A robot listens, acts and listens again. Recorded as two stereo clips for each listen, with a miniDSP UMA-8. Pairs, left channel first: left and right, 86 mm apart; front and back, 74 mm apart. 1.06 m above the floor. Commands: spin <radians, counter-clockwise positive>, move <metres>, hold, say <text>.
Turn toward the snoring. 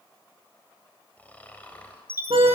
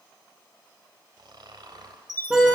spin 2.88
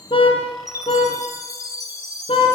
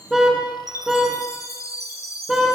hold
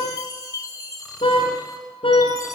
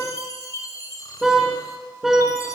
hold
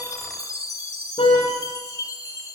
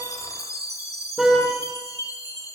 say I heard snoring from this way, but can't make it out now.